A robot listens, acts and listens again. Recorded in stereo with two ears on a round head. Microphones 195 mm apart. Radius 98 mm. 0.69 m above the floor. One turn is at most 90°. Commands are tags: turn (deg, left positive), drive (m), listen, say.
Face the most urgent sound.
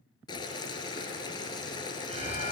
<turn deg="-30"/>
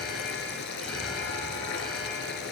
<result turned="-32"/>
<say>Found it: an alarm, straight ahead.</say>